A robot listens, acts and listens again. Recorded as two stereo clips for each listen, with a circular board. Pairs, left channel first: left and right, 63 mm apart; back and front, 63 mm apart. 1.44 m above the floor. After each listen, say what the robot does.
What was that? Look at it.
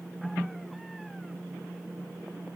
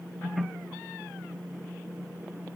Keep listening.
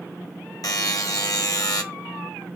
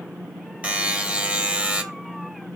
Turn 70° left.
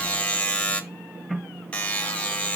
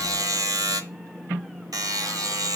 Turn 20° left.
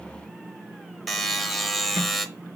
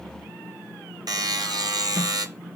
Found it: a buzzer, straight ahead.